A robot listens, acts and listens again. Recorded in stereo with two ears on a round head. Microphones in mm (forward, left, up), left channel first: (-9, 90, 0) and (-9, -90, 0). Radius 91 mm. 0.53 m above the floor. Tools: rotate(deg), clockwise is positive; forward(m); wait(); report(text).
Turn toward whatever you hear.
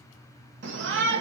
rotate(65)
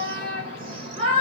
rotate(30)
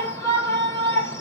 rotate(-15)
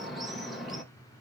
report("Found it: a shout, straight ahead, 1 to 2 m away.")